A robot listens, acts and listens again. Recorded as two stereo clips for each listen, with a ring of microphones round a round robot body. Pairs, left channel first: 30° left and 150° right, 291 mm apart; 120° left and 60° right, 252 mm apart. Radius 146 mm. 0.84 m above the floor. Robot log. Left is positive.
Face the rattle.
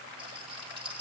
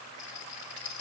note: The rattle: 135° left.
cmd yaw +135
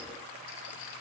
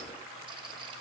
cmd idle
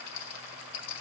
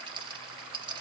note: The rattle is now 10° left.
cmd yaw +10
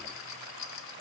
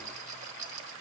end: Found it: a rattle, straight ahead.